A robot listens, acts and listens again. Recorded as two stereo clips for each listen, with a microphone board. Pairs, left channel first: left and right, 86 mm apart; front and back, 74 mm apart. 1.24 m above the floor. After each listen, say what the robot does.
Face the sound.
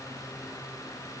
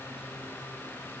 Keep listening.
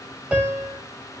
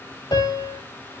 Turn 15° right.
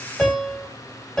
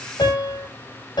Found it: a piano, straight ahead.